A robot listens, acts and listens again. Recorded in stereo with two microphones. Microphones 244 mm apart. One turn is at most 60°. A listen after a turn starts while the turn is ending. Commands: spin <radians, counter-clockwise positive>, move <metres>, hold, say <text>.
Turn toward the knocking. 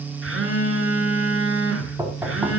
spin -0.52
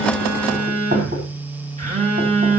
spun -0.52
spin -1.05
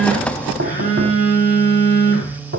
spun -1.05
spin -1.05
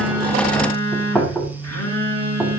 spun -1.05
say Facing the knocking, over 4 m away.